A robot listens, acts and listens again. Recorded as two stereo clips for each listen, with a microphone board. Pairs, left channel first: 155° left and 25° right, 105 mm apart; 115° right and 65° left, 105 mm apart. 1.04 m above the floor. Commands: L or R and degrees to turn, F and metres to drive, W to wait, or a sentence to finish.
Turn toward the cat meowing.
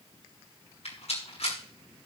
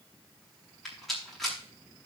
W
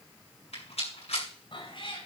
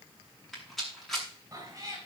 L125
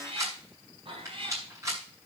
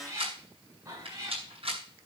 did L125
L10
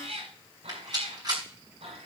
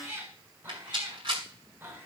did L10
Facing the cat meowing.